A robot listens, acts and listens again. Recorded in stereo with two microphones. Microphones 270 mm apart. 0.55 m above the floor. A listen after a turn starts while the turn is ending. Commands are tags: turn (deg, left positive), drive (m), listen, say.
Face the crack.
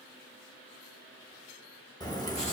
<turn deg="30"/>
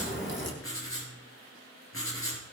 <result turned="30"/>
<turn deg="135"/>
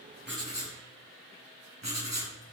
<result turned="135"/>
<say>Facing where the crack came from. I can't hear it now.</say>